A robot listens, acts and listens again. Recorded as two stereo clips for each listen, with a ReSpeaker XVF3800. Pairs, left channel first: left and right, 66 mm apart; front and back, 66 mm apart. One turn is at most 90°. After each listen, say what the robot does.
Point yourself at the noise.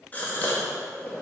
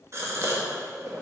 Turn 90° left.
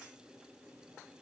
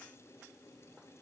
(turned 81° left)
Turn 70° left.
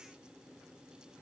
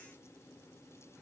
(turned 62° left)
I heard a gasp from this way, but can't make it out now.